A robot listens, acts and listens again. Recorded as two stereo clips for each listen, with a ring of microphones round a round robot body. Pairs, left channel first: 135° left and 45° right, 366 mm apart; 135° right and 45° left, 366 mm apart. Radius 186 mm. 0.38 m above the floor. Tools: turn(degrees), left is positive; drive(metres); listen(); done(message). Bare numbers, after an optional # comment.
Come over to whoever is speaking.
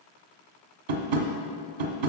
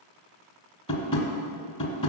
listen()
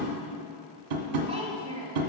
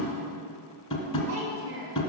# The child speaking: 30° left.
turn(30)
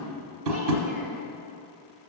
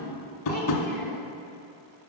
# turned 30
listen()
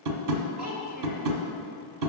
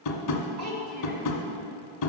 drive(1.0)
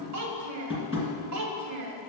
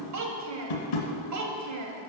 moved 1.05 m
drive(1.0)
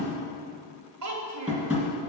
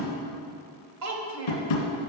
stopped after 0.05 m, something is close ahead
done("I am next to the child speaking.")